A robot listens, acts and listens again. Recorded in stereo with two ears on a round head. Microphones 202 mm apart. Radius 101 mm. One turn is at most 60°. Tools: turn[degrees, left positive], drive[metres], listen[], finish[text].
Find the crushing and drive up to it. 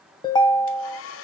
Action: listen[]
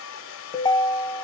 Action: listen[]
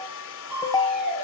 Action: turn[-30]
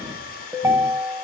Action: listen[]
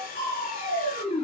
Thought: So it is at 25° left.
Action: turn[25]
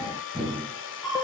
Action: drive[1.0]
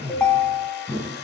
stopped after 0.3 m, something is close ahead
Action: finish[Blocked. The crushing is further on, straight ahead.]